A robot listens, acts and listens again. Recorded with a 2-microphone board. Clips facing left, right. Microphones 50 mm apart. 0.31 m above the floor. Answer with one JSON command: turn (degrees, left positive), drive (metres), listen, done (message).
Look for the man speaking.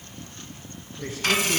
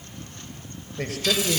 {"turn": -90}
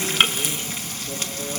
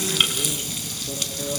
{"turn": -10}
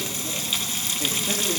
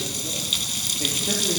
{"turn": -10}
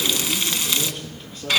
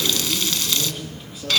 {"done": "Facing the man speaking, over 4 m away."}